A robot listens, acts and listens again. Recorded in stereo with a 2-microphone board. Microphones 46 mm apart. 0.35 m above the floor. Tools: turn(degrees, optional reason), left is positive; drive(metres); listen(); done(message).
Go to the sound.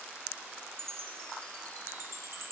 turn(degrees=-60, reason="The chime: about 60° right or 120° right.")
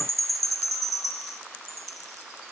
drive(metres=1.0)
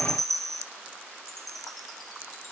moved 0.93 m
drive(metres=1.0)
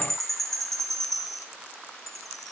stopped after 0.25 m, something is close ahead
done("Something is in my way. I am facing the chime but have not reached it.")